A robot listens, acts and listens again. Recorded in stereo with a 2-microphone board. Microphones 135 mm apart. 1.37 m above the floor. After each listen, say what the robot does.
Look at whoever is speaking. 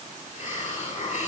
Keep listening.
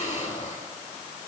Keep listening.
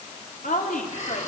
Turn 90° left.
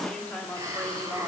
Turn 10° left.
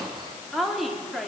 Facing the woman speaking.